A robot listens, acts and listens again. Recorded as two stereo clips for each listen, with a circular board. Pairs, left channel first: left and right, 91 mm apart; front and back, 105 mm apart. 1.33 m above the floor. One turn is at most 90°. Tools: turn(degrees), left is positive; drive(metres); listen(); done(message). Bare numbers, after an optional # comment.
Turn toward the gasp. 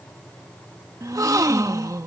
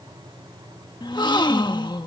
# The gasp: 45° right.
turn(-45)
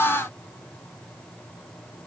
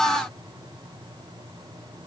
done("I heard a gasp from this way, but can't make it out now.")